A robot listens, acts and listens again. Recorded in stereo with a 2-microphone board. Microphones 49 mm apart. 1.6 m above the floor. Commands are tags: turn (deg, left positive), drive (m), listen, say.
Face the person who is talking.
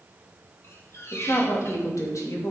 <turn deg="90"/>
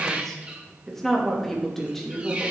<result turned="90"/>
<say>Facing the woman speaking.</say>